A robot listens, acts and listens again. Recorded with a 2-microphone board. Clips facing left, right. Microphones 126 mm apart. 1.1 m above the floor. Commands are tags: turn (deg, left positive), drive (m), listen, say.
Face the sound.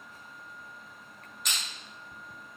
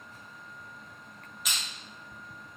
<turn deg="-30"/>
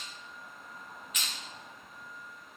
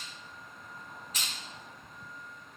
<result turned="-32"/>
<turn deg="-145"/>
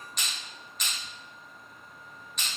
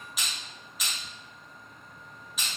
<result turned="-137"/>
<say>Found it: crushing, straight ahead.</say>